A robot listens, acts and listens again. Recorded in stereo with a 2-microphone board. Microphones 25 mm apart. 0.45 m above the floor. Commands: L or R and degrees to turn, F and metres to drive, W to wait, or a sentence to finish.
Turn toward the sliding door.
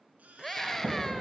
R50
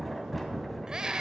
Found it: a sliding door, straight ahead, 2 to 4 m away.